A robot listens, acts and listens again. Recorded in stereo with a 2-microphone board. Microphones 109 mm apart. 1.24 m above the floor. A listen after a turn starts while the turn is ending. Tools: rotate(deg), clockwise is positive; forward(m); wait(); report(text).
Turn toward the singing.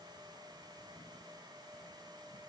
wait()
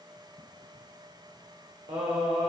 rotate(75)
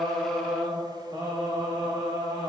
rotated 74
rotate(40)
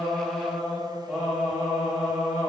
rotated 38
report("Found it: singing, straight ahead.")